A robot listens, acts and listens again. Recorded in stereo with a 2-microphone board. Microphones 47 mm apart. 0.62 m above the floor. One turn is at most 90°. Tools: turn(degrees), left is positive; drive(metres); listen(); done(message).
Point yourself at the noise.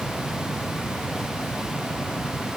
listen()
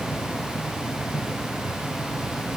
listen()
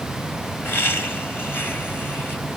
turn(degrees=50)
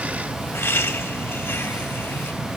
turn(degrees=80)
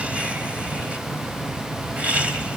turn(degrees=-25)
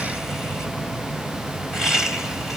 turn(degrees=-10)
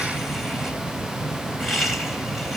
done("Facing the laughter, 2 to 4 m away.")